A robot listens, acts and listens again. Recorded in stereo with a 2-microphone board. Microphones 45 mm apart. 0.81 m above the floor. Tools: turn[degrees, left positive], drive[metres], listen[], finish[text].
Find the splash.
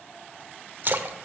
Thought: The splash: about 50° right or 130° right.
Action: turn[-50]
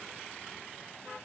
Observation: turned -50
Action: listen[]
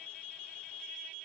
Action: finish[I heard a splash, but can't make it out now. It was about straight ahead or 80° right.]